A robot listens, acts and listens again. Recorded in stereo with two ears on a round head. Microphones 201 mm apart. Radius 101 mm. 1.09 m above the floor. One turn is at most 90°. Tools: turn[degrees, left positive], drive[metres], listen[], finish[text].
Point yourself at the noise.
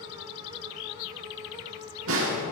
Thought: The snare drum: about 65° right or 115° right.
Action: turn[-65]
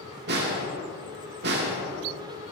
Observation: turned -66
Thought: So it is at 50° right.
Action: turn[-50]
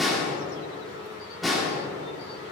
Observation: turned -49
Action: finish[Found it: a snare drum, straight ahead.]